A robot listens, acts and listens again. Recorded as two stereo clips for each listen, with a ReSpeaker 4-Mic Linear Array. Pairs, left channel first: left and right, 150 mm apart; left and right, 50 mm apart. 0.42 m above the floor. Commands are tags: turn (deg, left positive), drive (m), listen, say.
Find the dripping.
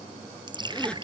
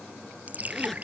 <turn deg="-30"/>
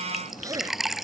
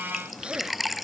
<say>Found it: dripping, straight ahead.</say>